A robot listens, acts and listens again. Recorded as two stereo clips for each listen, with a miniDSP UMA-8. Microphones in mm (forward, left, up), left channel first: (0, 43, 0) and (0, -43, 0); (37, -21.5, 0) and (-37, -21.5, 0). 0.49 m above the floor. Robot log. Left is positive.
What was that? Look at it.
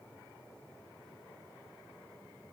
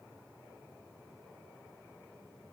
cmd idle
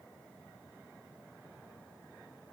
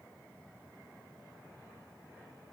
cmd idle
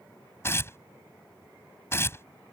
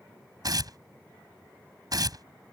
note: The tearing paper: 150° left.
cmd yaw +150
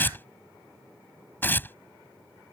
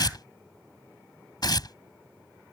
note: The tearing paper is now 25° left.
cmd yaw +25
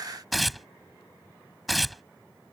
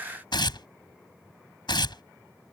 end: Found it: tearing paper, straight ahead.